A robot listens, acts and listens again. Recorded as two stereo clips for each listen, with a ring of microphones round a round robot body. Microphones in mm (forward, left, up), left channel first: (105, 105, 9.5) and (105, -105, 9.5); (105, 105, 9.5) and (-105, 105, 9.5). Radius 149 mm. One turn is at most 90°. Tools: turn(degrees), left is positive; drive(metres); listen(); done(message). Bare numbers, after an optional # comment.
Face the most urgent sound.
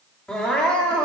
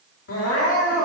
done("Found it: crying, straight ahead, 2 to 4 m away.")